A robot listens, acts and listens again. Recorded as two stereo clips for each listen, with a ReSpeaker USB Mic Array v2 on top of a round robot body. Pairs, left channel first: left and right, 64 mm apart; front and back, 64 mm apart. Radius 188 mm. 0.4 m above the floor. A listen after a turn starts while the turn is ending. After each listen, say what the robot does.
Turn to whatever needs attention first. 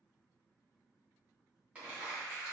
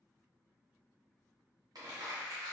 Keep listening.
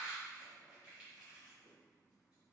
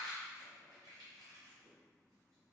Keep listening.
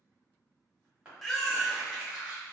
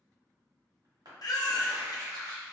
Facing the baby crying, under 1 m away.